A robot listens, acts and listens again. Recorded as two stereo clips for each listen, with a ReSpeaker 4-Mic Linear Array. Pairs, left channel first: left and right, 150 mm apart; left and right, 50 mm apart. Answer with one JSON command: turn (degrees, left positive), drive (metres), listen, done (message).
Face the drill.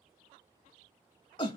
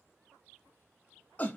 {"listen": true}
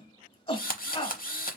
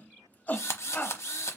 {"turn": 70}
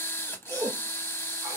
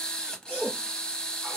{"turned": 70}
{"turn": 15}
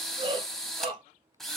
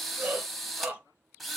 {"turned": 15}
{"done": "Found it: a drill, straight ahead, under 1 m away."}